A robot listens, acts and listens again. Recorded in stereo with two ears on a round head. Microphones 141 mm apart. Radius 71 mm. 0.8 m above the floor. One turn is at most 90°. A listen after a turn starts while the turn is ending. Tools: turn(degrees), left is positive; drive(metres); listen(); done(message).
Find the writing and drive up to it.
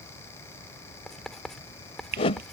turn(degrees=30)
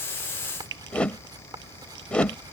turn(degrees=-25)
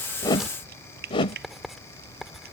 drive(metres=1.0)
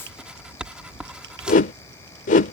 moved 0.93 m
drive(metres=1.0)
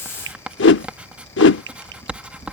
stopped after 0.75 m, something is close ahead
turn(degrees=-10)
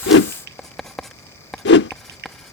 done("I am next to the writing.")